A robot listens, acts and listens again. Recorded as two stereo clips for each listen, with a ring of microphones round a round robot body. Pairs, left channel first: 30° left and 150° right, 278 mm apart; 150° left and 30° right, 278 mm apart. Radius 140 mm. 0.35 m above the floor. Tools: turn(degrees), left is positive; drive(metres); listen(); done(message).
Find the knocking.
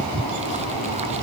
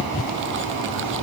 listen()
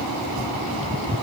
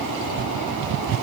listen()
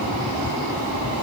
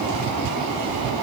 done("I can't make out knocking to turn to.")